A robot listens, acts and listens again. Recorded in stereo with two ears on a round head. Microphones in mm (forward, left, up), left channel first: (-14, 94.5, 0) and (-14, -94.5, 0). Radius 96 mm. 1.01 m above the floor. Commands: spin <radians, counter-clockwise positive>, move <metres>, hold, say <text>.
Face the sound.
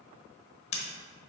spin 0.52
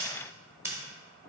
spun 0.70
spin -0.17
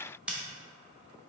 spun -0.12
say Facing the scissors.